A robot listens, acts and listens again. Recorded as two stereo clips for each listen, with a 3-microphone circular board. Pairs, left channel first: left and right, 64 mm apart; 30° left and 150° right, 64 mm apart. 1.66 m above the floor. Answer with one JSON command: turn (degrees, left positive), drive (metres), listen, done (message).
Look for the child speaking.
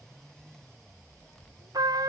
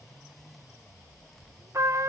{"listen": true}
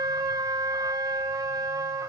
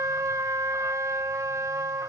{"listen": true}
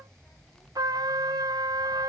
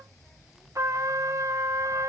{"done": "I can't make out a child speaking to turn to."}